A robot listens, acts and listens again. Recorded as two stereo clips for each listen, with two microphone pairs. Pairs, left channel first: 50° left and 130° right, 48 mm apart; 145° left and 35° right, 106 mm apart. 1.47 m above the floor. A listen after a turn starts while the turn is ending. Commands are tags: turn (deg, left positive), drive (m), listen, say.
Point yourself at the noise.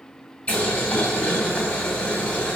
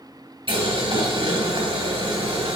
<turn deg="-20"/>
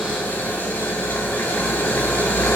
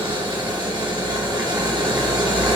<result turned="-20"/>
<say>Found it: boiling, straight ahead, 2 to 4 m away.</say>